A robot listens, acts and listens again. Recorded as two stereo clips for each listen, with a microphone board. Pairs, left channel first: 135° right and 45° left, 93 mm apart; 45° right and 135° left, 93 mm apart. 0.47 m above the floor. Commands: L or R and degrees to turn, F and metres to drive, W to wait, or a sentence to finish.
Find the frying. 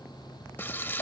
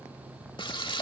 R70
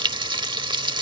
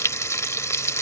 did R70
L15
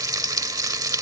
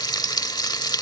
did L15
Found it: frying, straight ahead.